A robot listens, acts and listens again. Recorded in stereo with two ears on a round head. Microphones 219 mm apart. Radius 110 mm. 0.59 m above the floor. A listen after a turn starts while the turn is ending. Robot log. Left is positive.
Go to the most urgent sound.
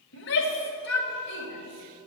note: The shout: about 50° left or 130° left.
cmd yaw +50
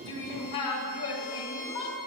note: So it is at 75° left.
cmd yaw +75
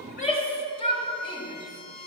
note: The shout is now 25° left.
cmd yaw +25
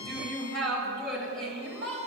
cmd fwd 1.0
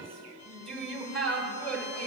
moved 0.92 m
cmd fwd 1.0
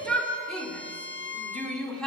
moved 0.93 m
cmd fwd 1.0
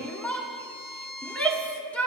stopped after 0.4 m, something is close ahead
note: The shout is now 10° left.
cmd yaw +10
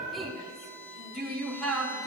end: Arrived at the shout, straight ahead.